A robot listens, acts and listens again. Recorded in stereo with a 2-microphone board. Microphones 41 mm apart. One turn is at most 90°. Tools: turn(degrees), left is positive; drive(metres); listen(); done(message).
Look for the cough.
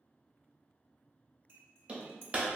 listen()
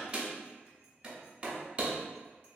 listen()
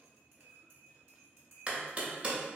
done("I can't make out a cough, only hammering and cutlery clinking.")